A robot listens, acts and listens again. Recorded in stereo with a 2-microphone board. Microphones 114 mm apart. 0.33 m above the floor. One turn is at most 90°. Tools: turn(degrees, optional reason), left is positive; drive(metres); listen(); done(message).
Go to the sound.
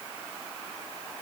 listen()
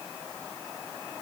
listen()
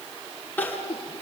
turn(degrees=15, reason="The crying: about 15° left or 165° left.")
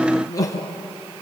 turn(degrees=90, reason="So it is at 150° left.")
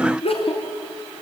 turn(degrees=60, reason="The crying is now 60° left.")
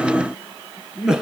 drive(metres=1.0)
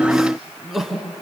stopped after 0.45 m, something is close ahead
done("Something is in my way. I am facing the crying but have not reached it.")